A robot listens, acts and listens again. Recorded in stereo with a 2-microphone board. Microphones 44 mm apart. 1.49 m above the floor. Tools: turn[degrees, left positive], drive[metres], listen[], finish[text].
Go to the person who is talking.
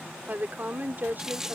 Thought: The woman speaking: about 40° right or 140° right.
Action: turn[-40]
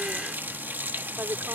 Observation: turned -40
Thought: So it is at 100° right.
Action: turn[-100]
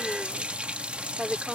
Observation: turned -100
Action: drive[1.0]
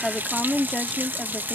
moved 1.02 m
Action: drive[1.0]
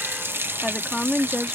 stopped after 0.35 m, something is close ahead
Action: finish[Something is in my way. I am facing the woman speaking but have not reached it.]